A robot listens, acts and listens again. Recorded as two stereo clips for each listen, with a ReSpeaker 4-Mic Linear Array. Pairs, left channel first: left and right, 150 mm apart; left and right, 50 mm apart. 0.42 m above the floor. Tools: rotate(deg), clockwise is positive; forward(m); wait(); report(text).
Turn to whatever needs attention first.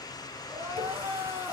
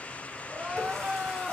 rotate(30)
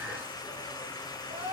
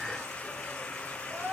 rotate(135)
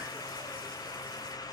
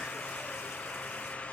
wait()
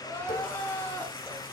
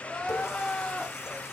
rotate(-10)
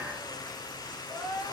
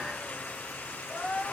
report("Facing the crying, 2 to 4 m away.")